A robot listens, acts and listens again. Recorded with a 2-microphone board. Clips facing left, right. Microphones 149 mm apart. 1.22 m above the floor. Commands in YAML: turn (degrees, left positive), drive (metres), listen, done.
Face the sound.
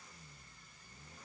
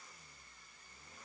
listen: true
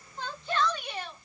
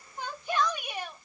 turn: -30
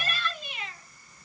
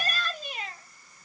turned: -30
turn: -140
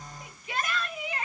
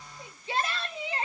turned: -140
turn: -30
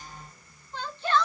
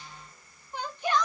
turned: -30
turn: -15
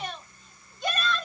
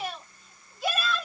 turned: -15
done: "Found it: a shout, straight ahead."